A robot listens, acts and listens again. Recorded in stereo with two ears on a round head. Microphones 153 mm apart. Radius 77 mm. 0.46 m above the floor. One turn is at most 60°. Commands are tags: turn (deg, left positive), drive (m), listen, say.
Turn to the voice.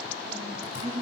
<turn deg="-30"/>
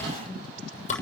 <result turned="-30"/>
<listen/>
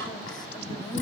<listen/>
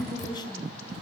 <turn deg="25"/>
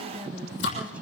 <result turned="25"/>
<say>Found it: a woman speaking, straight ahead.</say>